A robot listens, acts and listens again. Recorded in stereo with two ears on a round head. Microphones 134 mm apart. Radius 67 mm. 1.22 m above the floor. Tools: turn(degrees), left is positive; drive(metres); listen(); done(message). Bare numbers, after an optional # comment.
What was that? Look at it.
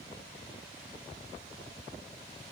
listen()
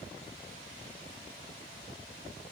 listen()
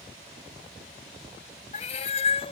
# The cat meowing: about 40° left or 140° left.
turn(40)
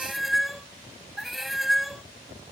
done("Found it: a cat meowing, straight ahead.")